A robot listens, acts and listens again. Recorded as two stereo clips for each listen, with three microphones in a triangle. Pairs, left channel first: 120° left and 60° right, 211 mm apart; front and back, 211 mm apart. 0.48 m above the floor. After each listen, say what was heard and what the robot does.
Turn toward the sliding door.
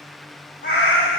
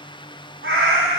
Keep listening.
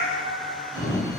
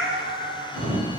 The sliding door: 60° left. Turn 60° left.
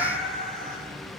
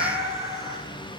The sliding door is now 15° left. Turn 15° left.
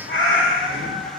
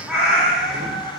Keep listening.
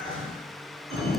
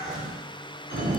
Found it: a sliding door, straight ahead, 1 to 2 m away.